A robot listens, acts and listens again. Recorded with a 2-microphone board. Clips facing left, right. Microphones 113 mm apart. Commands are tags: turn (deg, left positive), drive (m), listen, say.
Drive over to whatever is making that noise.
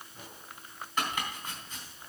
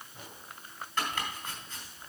<turn deg="30"/>
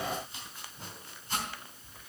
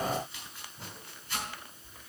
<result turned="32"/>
<turn deg="135"/>
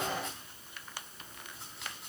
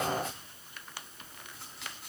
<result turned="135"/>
<drive m="1.0"/>
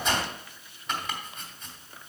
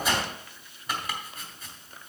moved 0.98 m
<drive m="1.0"/>
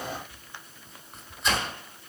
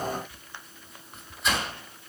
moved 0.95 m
<drive m="1.0"/>
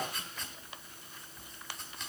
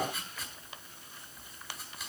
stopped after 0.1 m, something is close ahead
<say>Arrived at the chopping, straight ahead.</say>